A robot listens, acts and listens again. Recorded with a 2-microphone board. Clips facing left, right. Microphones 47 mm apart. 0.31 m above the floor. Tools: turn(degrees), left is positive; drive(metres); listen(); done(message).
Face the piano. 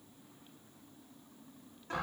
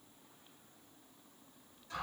listen()
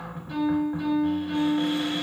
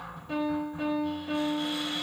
turn(degrees=-90)
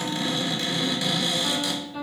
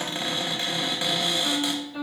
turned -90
done("Facing the piano, 1 to 2 m away.")